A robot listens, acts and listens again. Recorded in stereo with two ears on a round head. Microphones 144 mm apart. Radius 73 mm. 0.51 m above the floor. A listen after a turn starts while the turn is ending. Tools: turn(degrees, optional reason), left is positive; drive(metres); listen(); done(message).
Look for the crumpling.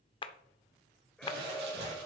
turn(degrees=-90)
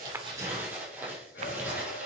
turn(degrees=-15, reason="So it is at 15° right.")
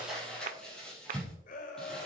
done("Facing the crumpling.")